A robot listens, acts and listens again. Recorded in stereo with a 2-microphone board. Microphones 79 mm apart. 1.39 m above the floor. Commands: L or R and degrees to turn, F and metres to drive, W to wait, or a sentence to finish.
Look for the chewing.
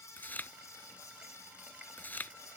L25
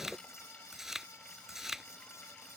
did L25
Facing the chewing.